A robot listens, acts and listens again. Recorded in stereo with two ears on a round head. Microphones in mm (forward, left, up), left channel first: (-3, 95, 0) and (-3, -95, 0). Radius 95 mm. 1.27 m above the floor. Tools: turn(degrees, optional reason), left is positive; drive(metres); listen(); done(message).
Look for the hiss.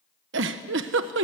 listen()
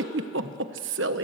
listen()
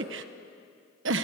done("I can't make out a hiss to turn to.")